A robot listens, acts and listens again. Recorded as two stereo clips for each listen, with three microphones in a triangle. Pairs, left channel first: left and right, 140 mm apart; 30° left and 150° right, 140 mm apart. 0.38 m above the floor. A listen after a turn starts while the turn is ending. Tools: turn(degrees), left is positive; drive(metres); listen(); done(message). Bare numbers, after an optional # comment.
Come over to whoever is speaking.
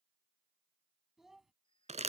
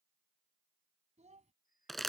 # The child speaking: straight behind.
turn(180)
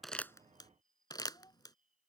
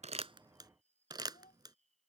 # The child speaking is now 30° left.
turn(30)
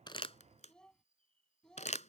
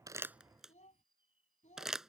drive(1.0)
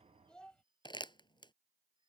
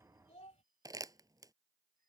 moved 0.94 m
drive(1.0)
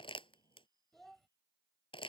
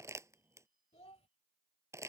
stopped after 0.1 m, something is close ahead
done("I am next to the child speaking.")